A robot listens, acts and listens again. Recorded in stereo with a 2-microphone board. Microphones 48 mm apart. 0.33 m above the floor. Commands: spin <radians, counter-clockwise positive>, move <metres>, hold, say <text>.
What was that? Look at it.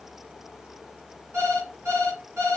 spin -1.05
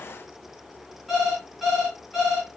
say Facing the alarm clock, 2 to 4 m away.